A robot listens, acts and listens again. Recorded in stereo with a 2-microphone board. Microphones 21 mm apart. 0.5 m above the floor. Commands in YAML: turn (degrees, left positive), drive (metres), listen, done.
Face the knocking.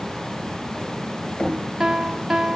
turn: 70
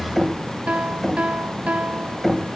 done: "Found it: knocking, straight ahead, 2 to 4 m away."